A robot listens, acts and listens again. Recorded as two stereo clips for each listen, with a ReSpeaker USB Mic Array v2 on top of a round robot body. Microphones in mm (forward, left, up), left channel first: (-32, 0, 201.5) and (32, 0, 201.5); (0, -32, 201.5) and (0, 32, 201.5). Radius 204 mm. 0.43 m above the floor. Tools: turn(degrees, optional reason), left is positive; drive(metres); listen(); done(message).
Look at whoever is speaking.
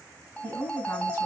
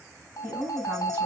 turn(degrees=145, reason="The woman speaking: 145° left.")
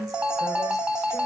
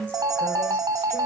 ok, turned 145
turn(degrees=-25, reason="The woman speaking is now 25° right.")
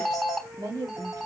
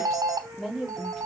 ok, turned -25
done("Found it: a woman speaking, straight ahead.")